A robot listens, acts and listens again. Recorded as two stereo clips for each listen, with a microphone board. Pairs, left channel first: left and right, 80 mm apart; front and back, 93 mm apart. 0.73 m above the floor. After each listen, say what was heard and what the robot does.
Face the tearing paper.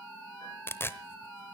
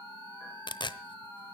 The tearing paper: 30° left. Turn 30° left.
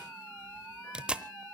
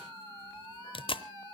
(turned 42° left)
The tearing paper is now 10° right. Turn 10° right.
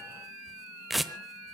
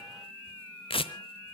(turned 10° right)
Facing the tearing paper, under 1 m away.